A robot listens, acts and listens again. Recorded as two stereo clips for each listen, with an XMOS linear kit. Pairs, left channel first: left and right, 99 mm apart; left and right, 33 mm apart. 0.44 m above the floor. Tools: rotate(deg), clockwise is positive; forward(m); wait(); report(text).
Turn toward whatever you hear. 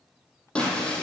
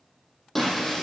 rotate(-30)
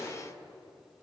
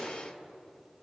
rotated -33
rotate(-135)
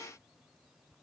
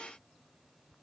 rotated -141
report("Facing where the breaking glass came from. I can't hear it now.")